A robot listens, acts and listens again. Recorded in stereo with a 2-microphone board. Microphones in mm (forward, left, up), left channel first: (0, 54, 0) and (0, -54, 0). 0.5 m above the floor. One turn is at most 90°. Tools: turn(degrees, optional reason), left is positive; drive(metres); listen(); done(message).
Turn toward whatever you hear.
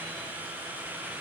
listen()
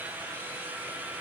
listen()
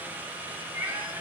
turn(degrees=-20, reason="The cat meowing: about 20° right or 160° right.")
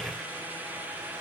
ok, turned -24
listen()
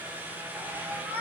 turn(degrees=-30)
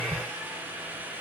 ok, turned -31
listen()
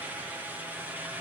listen()
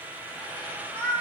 turn(degrees=15, reason="So it is at 15° left.")
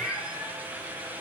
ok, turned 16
done("Facing the cat meowing, over 4 m away.")